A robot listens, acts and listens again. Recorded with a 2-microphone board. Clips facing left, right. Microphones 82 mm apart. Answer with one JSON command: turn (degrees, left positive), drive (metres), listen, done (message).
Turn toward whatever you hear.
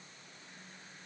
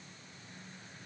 {"listen": true}
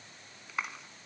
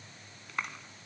{"turn": 30}
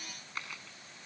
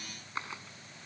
{"turn": -25}
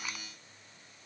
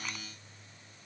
{"listen": true}
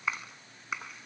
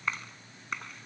{"done": "Found it: a clap, straight ahead."}